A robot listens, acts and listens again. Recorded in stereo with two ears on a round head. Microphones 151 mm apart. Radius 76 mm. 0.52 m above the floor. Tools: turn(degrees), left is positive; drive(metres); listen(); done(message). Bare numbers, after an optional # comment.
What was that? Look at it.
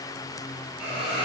turn(-30)
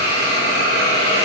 # So it is at 25° left.
turn(25)
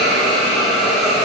done("Found it: a hiss, straight ahead.")